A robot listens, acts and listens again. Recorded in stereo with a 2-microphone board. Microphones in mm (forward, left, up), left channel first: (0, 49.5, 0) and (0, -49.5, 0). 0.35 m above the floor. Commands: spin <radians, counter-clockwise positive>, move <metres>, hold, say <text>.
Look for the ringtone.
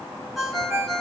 spin 0.52
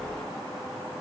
hold
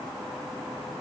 hold
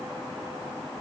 say I heard a ringtone, but can't make it out now. It was about 30° right or 150° left.